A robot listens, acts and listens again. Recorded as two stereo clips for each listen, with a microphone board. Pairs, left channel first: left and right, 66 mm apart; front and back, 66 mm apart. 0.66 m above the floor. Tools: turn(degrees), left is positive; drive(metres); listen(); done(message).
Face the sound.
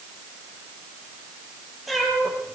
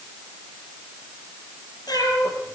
done("Found it: a cat meowing, straight ahead.")